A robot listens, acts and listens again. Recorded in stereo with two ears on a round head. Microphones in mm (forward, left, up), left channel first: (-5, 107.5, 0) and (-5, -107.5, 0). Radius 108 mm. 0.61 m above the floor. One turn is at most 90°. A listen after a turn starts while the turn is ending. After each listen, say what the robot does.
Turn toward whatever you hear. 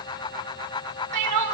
Turn 90° right.
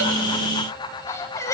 Turn 10° left.
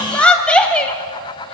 Found it: crying, straight ahead, 1 to 2 m away.